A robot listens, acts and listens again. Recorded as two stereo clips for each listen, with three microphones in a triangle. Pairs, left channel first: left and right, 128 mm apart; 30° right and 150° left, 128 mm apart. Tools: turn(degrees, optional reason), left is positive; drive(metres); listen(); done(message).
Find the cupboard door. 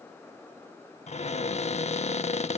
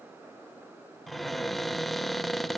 turn(degrees=60, reason="The cupboard door: 60° left.")
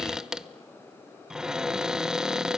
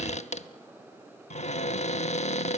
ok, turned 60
done("Found it: a cupboard door, straight ahead, under 1 m away.")